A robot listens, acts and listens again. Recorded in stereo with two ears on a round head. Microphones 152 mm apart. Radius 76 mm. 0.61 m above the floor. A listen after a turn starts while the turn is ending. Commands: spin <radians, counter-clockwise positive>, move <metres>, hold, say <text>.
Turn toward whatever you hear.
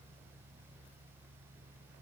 hold
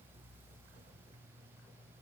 hold
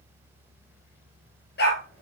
spin 1.05
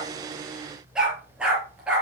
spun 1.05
say Found it: a dog barking, straight ahead.